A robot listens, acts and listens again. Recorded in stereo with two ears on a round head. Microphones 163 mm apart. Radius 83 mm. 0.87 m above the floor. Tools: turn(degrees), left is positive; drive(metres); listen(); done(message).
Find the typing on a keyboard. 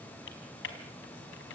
turn(degrees=75)
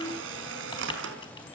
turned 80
listen()
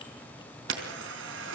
listen()
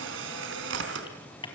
turn(degrees=25)
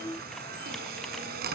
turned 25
listen()
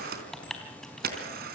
done("Found it: typing on a keyboard, straight ahead.")